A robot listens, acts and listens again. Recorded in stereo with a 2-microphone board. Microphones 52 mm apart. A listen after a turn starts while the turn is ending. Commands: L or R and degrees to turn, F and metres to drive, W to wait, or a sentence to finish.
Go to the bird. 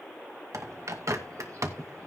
R75
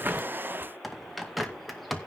F1.0
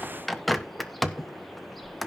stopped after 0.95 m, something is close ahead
I am next to the bird.